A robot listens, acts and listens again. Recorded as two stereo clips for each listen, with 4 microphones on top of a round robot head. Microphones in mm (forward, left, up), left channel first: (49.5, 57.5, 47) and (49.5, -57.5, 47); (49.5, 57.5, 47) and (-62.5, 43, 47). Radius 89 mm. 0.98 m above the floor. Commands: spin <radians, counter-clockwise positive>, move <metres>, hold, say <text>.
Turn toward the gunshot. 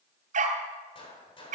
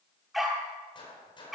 spin 0.87
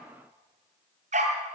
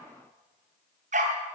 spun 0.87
say I heard a gunshot from this way, but can't make it out now.